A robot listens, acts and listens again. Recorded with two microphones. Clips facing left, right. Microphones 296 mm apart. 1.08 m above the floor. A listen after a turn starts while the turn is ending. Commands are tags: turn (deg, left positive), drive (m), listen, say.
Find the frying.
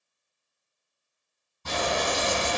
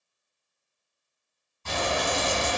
<turn deg="50"/>
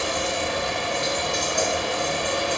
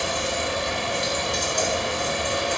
<turn deg="75"/>
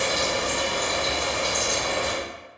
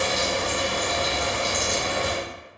<say>Facing the frying, 1 to 2 m away.</say>